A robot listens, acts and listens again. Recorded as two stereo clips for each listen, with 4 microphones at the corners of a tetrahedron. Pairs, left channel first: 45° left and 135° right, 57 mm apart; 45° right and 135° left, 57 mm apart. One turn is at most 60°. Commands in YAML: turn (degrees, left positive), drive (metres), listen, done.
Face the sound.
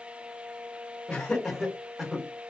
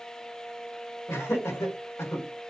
turn: -55
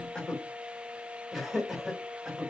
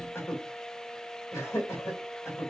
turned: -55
turn: -60
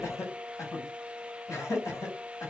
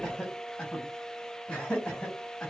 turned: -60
turn: 20
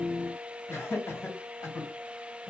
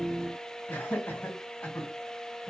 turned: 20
done: "Facing the laughter, 2 to 4 m away."